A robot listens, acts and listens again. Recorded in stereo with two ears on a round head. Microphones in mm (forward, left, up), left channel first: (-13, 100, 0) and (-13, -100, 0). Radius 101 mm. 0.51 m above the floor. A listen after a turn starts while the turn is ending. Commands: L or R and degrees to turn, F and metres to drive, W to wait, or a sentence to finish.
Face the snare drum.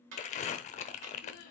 R60
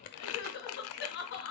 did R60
W
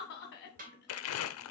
R45
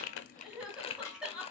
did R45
L15
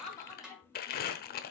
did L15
Facing the snare drum, 2 to 4 m away.